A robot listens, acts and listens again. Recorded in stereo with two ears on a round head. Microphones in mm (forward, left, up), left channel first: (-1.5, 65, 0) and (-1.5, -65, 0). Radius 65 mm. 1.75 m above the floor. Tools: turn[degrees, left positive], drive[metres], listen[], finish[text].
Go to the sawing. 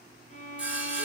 Action: turn[-30]
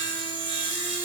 Thought: So it is at 140° right.
Action: turn[-140]
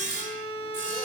Thought: The sawing is now 60° right.
Action: turn[-60]
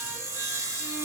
Thought: The sawing is now 25° right.
Action: turn[-25]
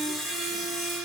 Action: drive[1.0]
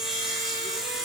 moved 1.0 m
Action: drive[1.0]
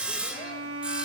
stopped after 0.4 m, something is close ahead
Thought: The sawing is now 10° right.
Action: turn[-10]
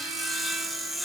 Action: finish[I am next to the sawing.]